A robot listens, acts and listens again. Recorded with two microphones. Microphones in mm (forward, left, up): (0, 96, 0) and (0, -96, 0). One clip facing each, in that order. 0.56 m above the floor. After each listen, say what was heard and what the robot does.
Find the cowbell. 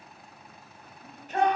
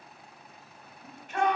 Keep listening.
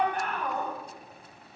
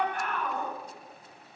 Keep listening.
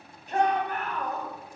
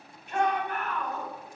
I can't make out a cowbell, only a shout.